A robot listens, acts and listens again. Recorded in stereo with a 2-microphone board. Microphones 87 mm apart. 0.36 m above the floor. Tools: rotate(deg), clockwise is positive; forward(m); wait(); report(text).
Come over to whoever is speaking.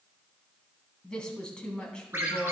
rotate(-30)
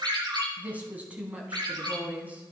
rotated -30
rotate(20)
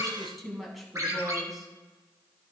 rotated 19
forward(1.0)
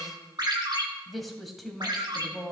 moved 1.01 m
forward(1.0)
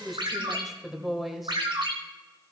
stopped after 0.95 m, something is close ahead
report("Arrived at the woman speaking, straight ahead.")